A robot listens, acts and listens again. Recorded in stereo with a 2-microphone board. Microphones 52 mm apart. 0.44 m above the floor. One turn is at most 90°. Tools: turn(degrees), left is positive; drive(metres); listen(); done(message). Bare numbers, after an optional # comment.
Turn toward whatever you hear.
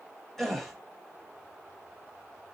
turn(30)
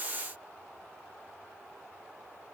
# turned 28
listen()
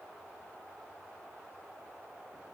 done("I heard a gasp, but can't make it out now. It was about 20° right or 145° left.")